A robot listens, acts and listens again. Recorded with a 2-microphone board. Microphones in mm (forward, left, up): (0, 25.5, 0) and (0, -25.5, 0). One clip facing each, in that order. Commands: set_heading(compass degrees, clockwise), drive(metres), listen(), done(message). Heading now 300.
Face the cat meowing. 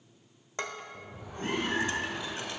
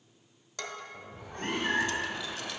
set_heading(5)
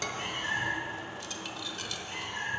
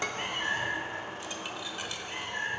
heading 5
set_heading(30)
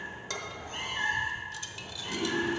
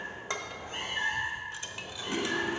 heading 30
set_heading(40)
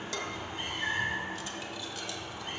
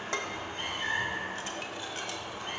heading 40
done("Facing the cat meowing.")